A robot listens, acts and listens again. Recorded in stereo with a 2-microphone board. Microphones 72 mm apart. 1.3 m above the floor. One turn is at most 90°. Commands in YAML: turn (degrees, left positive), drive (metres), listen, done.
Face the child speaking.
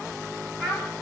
turn: 30
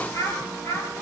turn: 90
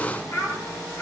turn: 45
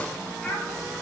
turn: 10
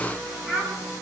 done: "Facing the child speaking, over 4 m away."